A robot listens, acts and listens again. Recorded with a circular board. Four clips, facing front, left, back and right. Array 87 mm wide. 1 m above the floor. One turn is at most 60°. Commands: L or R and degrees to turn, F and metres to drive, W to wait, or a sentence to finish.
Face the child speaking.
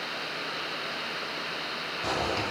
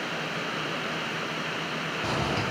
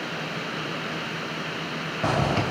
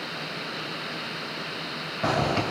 W
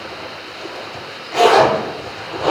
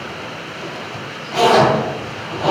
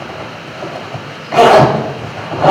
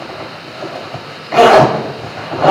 W
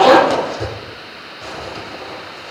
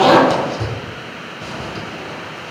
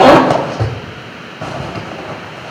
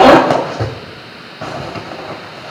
I can't make out a child speaking to turn to.